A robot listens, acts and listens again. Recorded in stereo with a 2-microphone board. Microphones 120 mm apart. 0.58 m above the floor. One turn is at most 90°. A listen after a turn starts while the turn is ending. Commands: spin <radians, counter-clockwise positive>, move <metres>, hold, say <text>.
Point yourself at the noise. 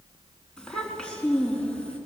spin 0.52
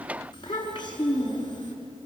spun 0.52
spin 1.57
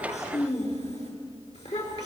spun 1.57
spin 1.13
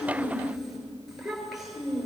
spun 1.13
say Facing the child speaking, over 4 m away.